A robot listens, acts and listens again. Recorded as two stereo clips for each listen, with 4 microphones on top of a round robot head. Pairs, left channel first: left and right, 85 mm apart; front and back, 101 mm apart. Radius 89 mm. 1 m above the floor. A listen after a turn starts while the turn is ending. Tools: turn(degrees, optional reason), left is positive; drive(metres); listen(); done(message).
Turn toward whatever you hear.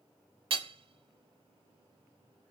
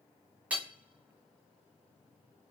turn(degrees=-100, reason="The hammering: 100° right.")
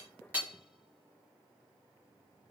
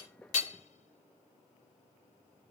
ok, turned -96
listen()
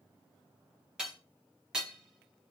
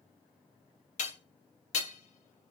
done("Facing the hammering.")